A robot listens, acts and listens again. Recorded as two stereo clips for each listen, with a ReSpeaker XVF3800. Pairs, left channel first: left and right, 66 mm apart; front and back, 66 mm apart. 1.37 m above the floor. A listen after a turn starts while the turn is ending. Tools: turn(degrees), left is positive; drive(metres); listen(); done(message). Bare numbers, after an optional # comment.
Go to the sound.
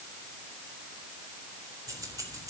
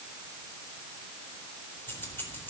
# The keys jangling: 60° right.
turn(-60)
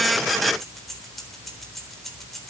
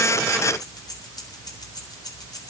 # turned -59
drive(1.0)
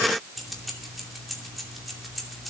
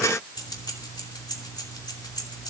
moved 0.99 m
drive(1.0)
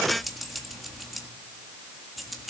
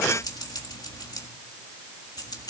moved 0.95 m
drive(1.0)
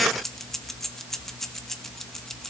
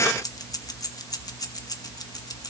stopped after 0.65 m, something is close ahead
done("I am next to the keys jangling.")